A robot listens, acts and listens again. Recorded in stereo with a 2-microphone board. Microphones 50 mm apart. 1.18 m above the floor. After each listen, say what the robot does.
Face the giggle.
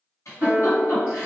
Turn 90° left.
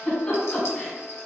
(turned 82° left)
Turn 20° left.
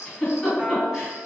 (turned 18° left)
Found it: a giggle, straight ahead, 1 to 2 m away.